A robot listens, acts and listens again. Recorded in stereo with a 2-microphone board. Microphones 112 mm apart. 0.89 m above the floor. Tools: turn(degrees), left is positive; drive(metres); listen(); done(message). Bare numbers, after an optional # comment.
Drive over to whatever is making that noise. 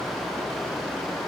listen()
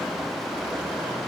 listen()
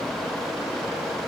done("I can't make out anything to turn to.")